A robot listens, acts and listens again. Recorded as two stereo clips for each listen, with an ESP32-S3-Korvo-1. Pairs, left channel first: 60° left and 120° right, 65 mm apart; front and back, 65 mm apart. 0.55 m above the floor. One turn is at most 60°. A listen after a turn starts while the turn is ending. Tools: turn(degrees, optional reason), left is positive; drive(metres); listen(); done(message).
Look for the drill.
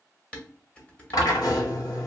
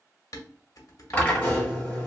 turn(degrees=60, reason="The drill: 70° left.")
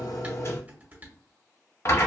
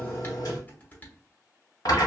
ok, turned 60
turn(degrees=20, reason="The drill is now 20° left.")
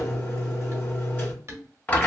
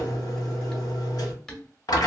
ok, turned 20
done("Found it: a drill, straight ahead, 1 to 2 m away.")